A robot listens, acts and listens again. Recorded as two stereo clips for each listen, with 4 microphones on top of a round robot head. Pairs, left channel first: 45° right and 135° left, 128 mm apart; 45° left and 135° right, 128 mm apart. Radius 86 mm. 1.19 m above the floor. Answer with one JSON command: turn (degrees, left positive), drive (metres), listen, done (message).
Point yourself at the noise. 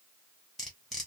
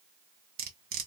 {"turn": -135}
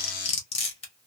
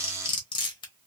{"done": "Facing the cutlery clinking, under 1 m away."}